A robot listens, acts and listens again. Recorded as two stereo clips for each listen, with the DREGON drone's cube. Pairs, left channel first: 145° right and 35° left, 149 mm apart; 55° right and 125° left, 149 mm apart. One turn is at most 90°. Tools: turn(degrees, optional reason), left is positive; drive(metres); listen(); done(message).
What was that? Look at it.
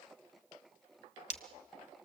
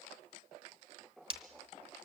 turn(degrees=90, reason="The breaking glass: 175° left.")
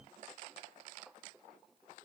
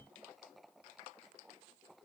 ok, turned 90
turn(degrees=85, reason="Nothing new. It was at 85° left.")
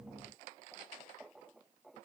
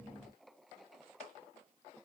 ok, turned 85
done("I heard breaking glass from this way, but can't make it out now.")